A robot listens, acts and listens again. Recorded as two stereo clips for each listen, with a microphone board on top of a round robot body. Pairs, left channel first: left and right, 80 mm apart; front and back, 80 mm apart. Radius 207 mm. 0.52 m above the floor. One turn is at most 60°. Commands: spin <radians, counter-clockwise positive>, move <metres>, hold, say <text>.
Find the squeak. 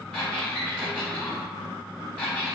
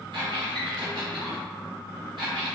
spin 1.05
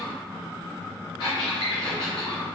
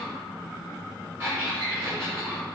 spin 1.05
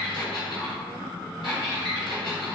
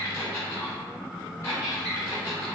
spin 1.05
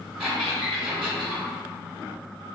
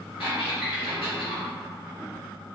spin -0.17
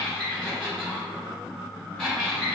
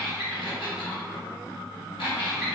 say Found it: a squeak, straight ahead.